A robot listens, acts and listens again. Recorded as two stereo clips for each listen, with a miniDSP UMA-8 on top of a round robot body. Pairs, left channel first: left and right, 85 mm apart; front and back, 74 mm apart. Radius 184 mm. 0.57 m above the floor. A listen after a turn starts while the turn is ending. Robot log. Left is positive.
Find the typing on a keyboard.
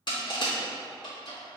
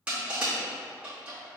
cmd idle
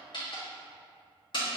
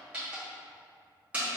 cmd idle
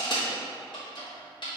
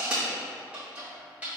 end: I can't make out typing on a keyboard to turn to.